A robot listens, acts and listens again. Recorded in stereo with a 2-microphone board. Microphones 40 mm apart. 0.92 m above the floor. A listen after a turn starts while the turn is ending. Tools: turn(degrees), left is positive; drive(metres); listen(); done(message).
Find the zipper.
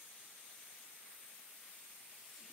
listen()
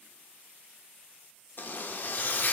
turn(degrees=50)
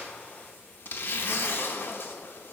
turn(degrees=70)
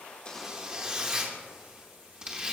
turn(degrees=-20)
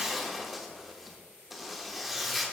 done("Found it: a zipper, straight ahead, under 1 m away.")